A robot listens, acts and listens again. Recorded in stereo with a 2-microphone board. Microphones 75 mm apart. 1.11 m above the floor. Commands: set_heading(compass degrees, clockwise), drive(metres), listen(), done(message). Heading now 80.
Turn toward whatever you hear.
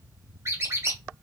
set_heading(120)
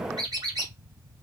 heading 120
set_heading(215)
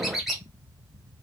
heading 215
done("Found it: a squeak, straight ahead.")